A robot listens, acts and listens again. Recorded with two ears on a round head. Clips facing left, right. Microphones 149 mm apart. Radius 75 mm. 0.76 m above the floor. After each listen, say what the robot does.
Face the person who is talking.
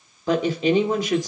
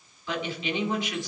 Turn 35° left.
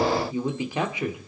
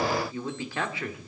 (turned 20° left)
Turn 15° left.
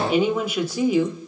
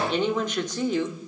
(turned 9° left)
Turn 10° left.
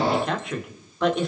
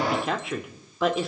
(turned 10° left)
Found it: a woman speaking, straight ahead.